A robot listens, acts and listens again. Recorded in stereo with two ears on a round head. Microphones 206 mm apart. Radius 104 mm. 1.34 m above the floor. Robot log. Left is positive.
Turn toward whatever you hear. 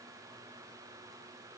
cmd idle
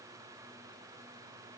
cmd idle
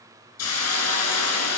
note: The hiss: about 70° left or 110° left.
cmd yaw +70
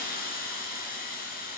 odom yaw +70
note: So it is at 35° left.
cmd yaw +35
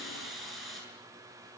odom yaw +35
end: Facing the hiss, over 4 m away.